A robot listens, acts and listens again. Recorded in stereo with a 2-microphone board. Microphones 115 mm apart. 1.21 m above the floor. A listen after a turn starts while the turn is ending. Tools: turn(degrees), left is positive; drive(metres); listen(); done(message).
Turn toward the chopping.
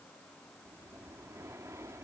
listen()
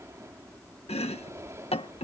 turn(degrees=65)
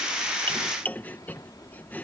turn(degrees=15)
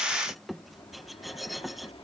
done("Facing the chopping.")